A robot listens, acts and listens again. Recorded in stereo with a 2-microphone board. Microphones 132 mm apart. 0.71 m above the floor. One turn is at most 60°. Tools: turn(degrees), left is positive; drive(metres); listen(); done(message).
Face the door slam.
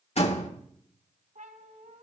turn(degrees=55)
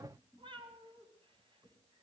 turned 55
listen()
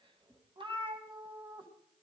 done("I heard a door slam, but can't make it out now. It was about straight ahead or 70° left.")